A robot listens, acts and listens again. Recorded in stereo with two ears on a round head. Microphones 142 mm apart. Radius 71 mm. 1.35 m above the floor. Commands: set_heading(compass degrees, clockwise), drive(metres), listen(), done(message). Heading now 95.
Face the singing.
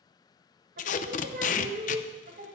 set_heading(145)
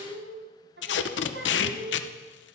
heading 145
set_heading(220)
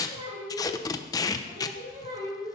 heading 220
set_heading(250)
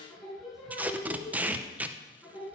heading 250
done("Facing the singing.")